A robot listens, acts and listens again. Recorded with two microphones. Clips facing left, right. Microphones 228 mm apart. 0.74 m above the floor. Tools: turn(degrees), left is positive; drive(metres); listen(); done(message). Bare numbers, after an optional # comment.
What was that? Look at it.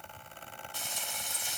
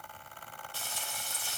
# The frying: about 20° left or 160° left.
turn(20)
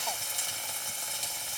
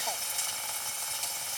# So it is at 140° left.
turn(140)
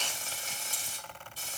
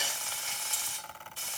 # The frying is now 40° left.
turn(40)
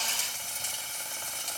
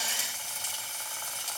# The frying is now 10° right.
turn(-10)
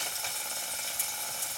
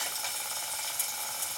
done("Facing the frying.")